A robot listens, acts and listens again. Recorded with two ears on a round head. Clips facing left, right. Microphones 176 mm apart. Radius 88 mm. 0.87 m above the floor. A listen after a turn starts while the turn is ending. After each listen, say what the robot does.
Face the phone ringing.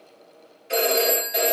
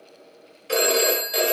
Turn 90° right.
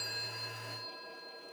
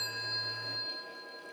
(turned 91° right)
Keep listening.
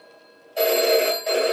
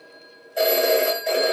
Found it: a phone ringing, straight ahead.